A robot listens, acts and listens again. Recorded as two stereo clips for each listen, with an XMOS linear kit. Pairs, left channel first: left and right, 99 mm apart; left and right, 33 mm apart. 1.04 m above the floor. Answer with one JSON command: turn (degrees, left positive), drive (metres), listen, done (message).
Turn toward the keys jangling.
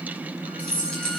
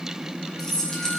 {"turn": 30}
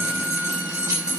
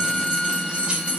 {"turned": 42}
{"turn": -40}
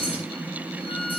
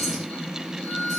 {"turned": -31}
{"turn": -10}
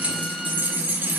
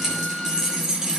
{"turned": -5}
{"turn": -20}
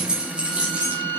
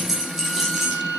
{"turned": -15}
{"turn": -15}
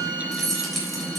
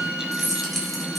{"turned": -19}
{"done": "Facing the keys jangling, 2 to 4 m away."}